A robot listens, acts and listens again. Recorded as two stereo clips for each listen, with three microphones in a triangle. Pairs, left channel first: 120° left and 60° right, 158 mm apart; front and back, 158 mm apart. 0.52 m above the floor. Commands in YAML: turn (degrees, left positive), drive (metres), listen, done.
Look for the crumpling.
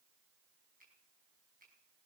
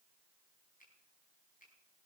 listen: true
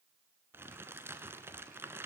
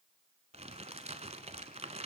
turn: -135
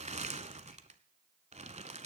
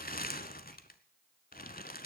turn: -15
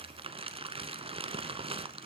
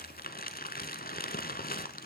done: "Found it: crumpling, straight ahead."